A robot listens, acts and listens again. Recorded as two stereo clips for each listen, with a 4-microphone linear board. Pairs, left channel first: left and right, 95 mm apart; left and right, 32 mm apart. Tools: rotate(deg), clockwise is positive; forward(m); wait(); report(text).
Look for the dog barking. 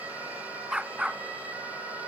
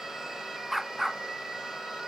rotate(30)
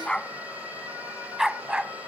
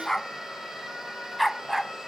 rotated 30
rotate(30)
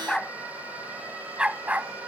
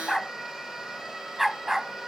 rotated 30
rotate(15)
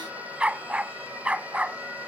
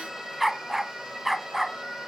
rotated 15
rotate(30)
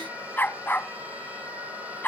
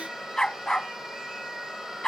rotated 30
rotate(-20)
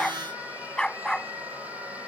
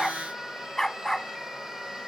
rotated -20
report("Facing the dog barking.")